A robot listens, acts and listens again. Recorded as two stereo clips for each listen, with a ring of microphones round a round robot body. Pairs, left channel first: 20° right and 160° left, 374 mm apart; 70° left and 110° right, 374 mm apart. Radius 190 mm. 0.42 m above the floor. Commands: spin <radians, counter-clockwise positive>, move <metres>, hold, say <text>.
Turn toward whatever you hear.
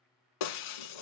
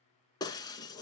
spin -0.26
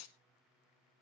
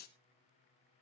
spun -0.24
say Facing the breaking glass, 1 to 2 m away.